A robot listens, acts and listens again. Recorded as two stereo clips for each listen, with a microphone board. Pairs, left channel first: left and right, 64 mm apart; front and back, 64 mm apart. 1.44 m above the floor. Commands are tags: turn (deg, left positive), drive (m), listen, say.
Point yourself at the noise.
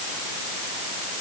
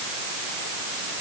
<listen/>
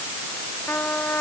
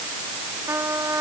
<turn deg="145"/>
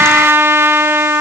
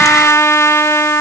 <turn deg="-40"/>
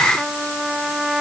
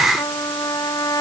<say>Facing the trumpet.</say>